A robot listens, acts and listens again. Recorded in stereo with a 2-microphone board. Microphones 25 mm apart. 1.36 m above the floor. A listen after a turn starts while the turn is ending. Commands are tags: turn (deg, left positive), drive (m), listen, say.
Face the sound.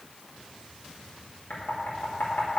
<turn deg="90"/>
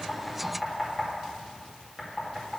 <say>Found it: knocking, straight ahead.</say>